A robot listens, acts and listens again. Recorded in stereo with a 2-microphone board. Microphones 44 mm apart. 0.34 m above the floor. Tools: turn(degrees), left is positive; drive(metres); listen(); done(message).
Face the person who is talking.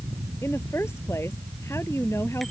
turn(degrees=90)
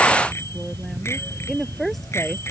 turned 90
done("Facing the woman speaking.")